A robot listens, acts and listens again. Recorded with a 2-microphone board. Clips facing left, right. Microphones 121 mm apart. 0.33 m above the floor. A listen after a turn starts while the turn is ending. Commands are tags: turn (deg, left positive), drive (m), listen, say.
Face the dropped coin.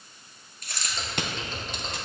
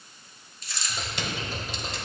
<turn deg="60"/>
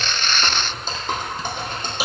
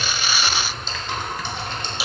<listen/>
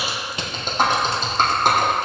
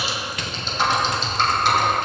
<say>I heard a dropped coin, but can't make it out now. It was about straight ahead or 60° left.</say>